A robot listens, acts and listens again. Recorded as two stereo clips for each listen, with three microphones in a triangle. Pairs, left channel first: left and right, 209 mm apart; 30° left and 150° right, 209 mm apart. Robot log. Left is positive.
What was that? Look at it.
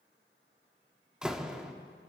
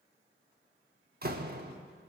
note: The door slam: 175° right.
cmd yaw -175
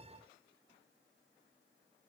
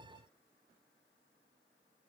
end: Facing where the door slam came from. I can't hear it now.